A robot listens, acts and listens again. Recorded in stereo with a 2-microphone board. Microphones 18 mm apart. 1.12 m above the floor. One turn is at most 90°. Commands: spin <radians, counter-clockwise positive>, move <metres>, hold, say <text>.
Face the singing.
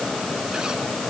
hold
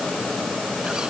hold
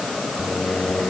spin 1.05
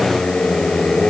spin 1.13
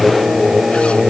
spin -0.26
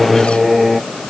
say Facing the singing.